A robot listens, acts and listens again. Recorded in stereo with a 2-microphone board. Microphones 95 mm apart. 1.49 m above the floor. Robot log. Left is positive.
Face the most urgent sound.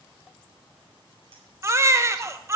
note: The baby crying: about 30° right or 150° right.
cmd yaw -30
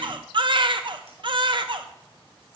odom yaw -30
note: So it is at 120° right.
cmd yaw -120
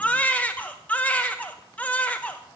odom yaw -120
note: The baby crying is now 15° left.
cmd yaw +15
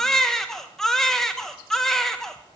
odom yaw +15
end: Facing the baby crying.